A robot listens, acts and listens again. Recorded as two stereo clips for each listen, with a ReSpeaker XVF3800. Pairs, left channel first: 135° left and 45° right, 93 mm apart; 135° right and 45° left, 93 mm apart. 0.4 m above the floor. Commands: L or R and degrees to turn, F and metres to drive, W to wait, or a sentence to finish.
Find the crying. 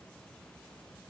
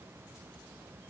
W
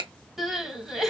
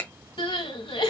R130
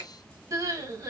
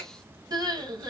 Found it: crying, straight ahead.